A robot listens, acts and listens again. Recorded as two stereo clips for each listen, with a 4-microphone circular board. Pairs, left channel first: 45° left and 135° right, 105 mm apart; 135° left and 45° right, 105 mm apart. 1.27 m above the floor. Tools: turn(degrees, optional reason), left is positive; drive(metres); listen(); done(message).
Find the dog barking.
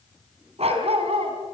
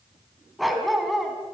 turn(degrees=-135, reason="The dog barking: 135° right.")
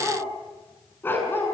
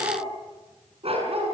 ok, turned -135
turn(degrees=-25, reason="The dog barking is now 25° right.")
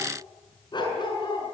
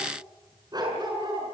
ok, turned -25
done("Facing the dog barking, over 4 m away.")